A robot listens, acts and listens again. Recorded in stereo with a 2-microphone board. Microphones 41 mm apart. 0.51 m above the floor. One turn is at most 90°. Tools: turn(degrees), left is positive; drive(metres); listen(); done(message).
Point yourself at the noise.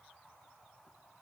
listen()
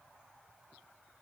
listen()
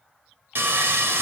turn(degrees=-70)
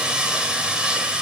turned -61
turn(degrees=-25)
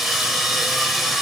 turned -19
done("Facing the sawing.")